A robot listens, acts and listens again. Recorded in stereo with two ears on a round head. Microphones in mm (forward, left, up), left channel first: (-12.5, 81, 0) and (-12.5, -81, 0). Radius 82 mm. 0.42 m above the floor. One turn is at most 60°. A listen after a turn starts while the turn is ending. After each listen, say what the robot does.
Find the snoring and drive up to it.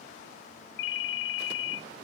Keep listening.
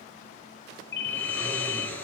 Turn 30° left.
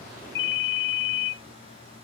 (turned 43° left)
Turn 30° right.
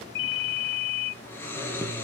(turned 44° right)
Turn 10° left.
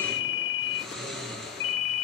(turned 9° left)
Drive 1.0 m forward.
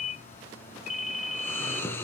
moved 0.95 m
Turn 10° left.
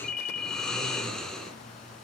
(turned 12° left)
Drive 1.0 m forward.
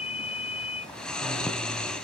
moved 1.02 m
Drive 1.0 m forward.
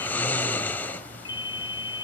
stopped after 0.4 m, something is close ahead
Turn 10° left.
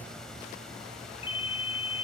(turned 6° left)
Arrived at the snoring, straight ahead.